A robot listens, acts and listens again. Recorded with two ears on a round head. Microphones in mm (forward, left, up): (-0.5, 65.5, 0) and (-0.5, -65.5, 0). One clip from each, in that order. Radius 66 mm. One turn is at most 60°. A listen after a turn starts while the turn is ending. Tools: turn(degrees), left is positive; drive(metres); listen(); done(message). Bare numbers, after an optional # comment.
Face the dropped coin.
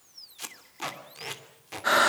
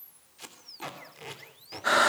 listen()
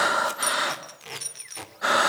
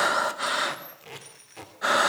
# The dropped coin: about 75° left or 105° left.
turn(60)
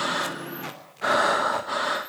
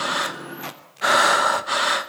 listen()
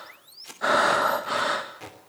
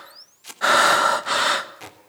done("I heard a dropped coin, but can't make it out now. It was about 15° left or 45° left.")